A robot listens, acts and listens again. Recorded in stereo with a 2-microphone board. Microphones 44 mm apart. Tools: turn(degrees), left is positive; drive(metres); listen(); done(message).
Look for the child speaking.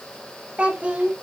turn(degrees=-35)
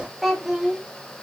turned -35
turn(degrees=-10)
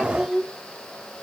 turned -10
done("Facing the child speaking.")